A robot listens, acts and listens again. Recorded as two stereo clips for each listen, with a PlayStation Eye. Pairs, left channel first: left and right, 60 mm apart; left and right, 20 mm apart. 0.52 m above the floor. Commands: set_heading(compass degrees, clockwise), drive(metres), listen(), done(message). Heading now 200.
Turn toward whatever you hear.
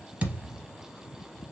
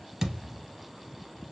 set_heading(225)
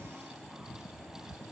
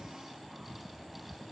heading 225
listen()
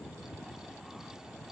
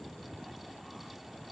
done("I heard a thud, but can't make it out now. It was about straight ahead or 130° right.")